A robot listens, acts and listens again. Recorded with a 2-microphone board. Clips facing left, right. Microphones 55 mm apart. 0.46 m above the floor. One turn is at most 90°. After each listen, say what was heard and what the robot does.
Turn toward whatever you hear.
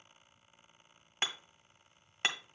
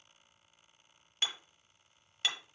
The hammering: about 40° left or 140° left. Turn 40° left.
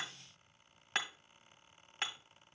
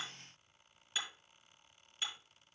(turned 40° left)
So it is at 100° left. Turn 90° left.
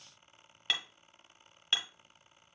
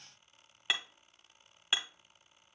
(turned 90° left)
The hammering is now 15° right. Turn 15° right.
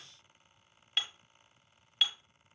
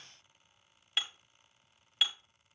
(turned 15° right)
Facing the hammering, 1 to 2 m away.